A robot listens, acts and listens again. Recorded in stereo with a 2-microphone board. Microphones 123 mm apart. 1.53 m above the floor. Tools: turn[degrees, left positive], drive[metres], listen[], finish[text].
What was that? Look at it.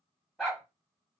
Action: turn[-30]
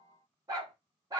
Thought: So it is at 150° right.
Action: turn[-150]
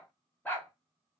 Thought: The dog barking is now 15° left.
Action: turn[15]
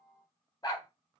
Thought: The dog barking is now 35° left.
Action: turn[35]
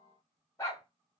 Thought: The dog barking is now 25° left.
Action: turn[25]
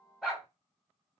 Action: finish[Found it: a dog barking, straight ahead.]